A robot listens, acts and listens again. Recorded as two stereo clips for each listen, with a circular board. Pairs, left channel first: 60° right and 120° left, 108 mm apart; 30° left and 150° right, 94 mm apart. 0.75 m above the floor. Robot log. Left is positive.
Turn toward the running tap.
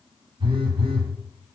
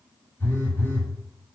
cmd idle
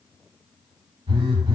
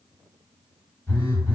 cmd idle
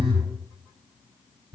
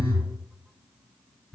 end: I can't make out a running tap, only a phone buzzing.